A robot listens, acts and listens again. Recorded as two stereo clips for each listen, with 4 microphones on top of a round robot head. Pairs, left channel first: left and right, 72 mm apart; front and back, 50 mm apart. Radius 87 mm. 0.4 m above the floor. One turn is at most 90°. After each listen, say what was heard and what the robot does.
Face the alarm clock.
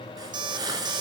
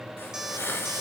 The alarm clock: 100° right. Turn 90° right.
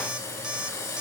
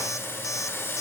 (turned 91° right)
Nothing new. It was at 10° right. Turn 10° right.
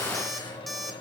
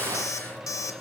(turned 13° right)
Found it: an alarm clock, straight ahead.